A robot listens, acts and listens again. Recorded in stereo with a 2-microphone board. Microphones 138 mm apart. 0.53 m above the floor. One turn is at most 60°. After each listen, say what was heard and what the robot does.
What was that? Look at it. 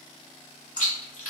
The chewing: about 70° left or 110° left. Turn 60° left.
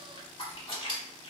So it is at 40° left. Turn 40° left.
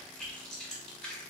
Found it: chewing, straight ahead, 1 to 2 m away.